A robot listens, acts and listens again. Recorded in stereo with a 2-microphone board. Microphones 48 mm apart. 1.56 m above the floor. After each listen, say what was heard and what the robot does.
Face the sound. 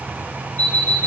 The alarm clock: about 35° left or 145° left. Turn 35° left.
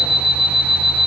Found it: an alarm clock, straight ahead, 1 to 2 m away.